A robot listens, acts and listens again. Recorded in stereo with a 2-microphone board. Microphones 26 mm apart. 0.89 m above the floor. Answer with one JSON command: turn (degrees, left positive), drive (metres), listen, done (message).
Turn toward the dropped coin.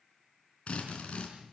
{"listen": true}
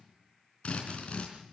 {"listen": true}
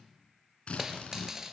{"turn": -20}
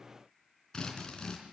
{"listen": true}
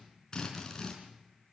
{"done": "I heard a dropped coin, but can't make it out now. It was about straight ahead or 140° right."}